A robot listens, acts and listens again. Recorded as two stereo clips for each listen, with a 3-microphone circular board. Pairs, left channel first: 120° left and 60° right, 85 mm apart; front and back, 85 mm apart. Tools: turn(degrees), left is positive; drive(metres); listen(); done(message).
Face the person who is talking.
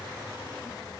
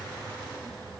listen()
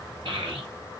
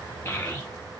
turn(degrees=-65)
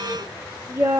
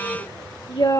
done("Facing the child speaking, 1 to 2 m away.")